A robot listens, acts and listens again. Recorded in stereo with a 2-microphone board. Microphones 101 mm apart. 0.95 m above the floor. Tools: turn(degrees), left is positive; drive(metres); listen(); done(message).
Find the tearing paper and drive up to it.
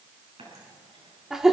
listen()
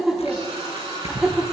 turn(degrees=90)
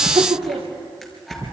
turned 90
drive(metres=1.0)
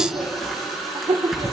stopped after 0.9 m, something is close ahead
done("Something is in my way. I am facing the tearing paper but have not reached it.")